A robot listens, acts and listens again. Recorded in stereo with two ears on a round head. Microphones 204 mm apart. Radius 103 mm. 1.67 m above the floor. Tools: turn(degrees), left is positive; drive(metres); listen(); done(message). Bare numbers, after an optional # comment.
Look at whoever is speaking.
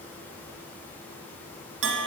listen()
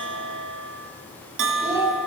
turn(-30)
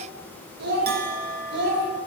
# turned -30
# So it is at 125° right.
turn(-125)
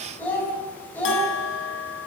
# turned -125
# The child speaking is now 10° left.
turn(10)
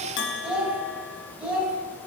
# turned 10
done("Facing the child speaking, over 4 m away.")